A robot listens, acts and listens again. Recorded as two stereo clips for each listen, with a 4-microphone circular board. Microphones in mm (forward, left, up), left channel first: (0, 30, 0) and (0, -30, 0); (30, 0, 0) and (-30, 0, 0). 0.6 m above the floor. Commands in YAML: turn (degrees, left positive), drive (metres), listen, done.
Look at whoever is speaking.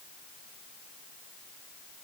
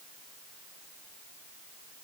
listen: true
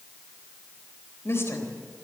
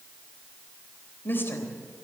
turn: 50
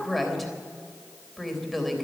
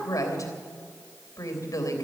done: "Facing the woman speaking, 2 to 4 m away."